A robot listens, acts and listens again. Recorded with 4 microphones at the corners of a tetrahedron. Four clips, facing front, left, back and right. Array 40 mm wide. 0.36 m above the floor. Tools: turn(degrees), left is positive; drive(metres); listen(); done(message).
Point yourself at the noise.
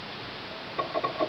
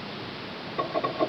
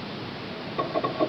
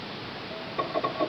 listen()
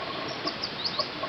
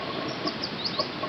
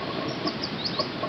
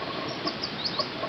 listen()
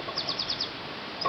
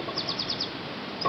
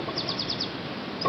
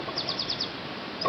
done("I can't make out anything to turn to.")